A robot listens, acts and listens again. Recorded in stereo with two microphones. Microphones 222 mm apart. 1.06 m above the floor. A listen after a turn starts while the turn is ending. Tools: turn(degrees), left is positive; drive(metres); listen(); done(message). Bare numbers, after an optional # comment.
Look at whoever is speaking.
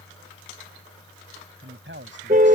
# The man speaking: about 60° right or 120° right.
turn(-60)
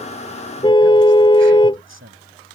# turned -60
# So it is at 70° right.
turn(-70)
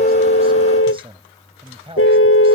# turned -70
# The man speaking is now 25° right.
turn(-25)
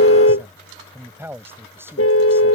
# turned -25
# The man speaking is now 10° right.
turn(-10)
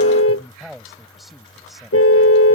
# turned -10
done("Found it: a man speaking, straight ahead.")